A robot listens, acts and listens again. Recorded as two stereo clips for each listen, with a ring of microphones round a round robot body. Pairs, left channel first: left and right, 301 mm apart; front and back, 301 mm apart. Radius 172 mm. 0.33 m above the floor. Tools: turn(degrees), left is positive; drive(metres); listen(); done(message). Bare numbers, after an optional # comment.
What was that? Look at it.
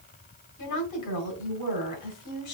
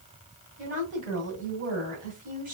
# The woman speaking: 115° left.
turn(115)
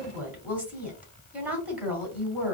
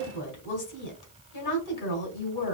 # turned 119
done("Facing the woman speaking, 2 to 4 m away.")